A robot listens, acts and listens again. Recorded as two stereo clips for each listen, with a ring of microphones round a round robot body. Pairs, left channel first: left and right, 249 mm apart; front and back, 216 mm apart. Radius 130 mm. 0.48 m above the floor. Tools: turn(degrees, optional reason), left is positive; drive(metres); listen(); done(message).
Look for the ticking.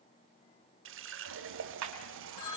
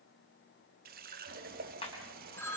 turn(degrees=-70, reason="The ticking: 70° right.")
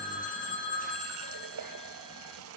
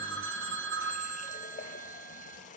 listen()
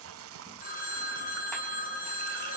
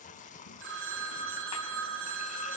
listen()
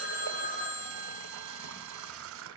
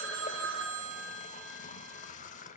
done("Facing where the ticking came from. I can't hear it now.")